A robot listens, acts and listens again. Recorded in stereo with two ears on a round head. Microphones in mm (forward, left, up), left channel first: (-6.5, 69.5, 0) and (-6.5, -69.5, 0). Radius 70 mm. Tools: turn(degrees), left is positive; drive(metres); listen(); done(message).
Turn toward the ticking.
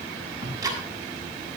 turn(degrees=-20)
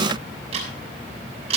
turn(degrees=-140)
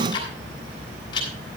turn(degrees=30)
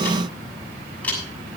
turn(degrees=10)
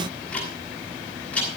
turn(degrees=10)
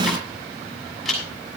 done("Facing the ticking.")